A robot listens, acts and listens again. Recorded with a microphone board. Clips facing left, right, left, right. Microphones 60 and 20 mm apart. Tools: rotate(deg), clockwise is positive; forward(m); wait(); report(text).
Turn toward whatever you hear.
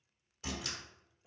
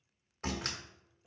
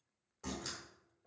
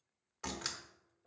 rotate(55)
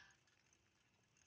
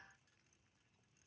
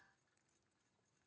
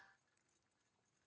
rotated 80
wait()
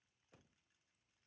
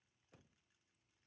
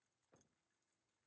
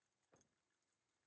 report("I heard a door slam, but can't make it out now. It was about 25° left or 45° right.")